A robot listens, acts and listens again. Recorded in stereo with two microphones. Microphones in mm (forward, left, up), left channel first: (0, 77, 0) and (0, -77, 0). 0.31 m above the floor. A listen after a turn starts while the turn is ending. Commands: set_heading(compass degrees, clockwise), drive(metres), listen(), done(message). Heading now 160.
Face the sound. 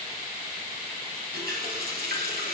set_heading(250)
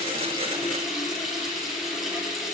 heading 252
done("Found it: a running tap, straight ahead.")